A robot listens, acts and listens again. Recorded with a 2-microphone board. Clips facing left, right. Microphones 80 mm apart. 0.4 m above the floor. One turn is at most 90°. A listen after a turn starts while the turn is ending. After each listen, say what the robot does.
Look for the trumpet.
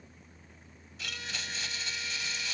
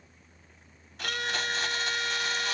Turn 75° right.
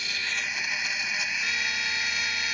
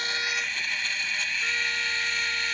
Keep listening.
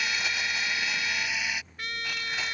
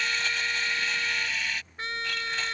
Turn 30° right.
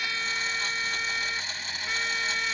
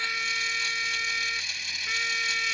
Found it: a trumpet, straight ahead.